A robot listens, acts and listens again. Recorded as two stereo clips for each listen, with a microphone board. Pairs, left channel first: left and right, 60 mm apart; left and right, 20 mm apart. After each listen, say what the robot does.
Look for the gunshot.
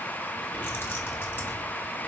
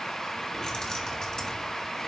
Keep listening.
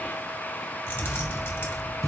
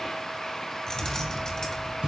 Turn 70° right.
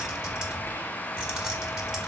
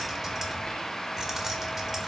Keep listening.
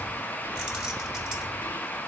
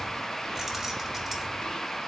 I heard a gunshot, but can't make it out now. It was about straight ahead or 40° right.